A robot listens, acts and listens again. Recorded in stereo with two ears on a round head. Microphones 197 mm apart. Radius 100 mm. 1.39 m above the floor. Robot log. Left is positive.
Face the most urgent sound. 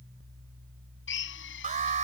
note: The alarm: about 35° right or 145° right.
cmd yaw -35
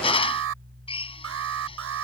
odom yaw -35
note: So it is at 110° right.
cmd yaw -110
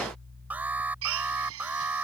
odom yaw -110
end: Facing the alarm.